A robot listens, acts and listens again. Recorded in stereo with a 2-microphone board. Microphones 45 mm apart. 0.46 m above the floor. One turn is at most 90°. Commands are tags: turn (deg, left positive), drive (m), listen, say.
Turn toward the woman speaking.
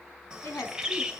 <turn deg="70"/>
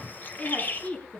<turn deg="25"/>
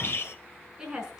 <turn deg="-15"/>
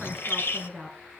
<say>Found it: a woman speaking, straight ahead.</say>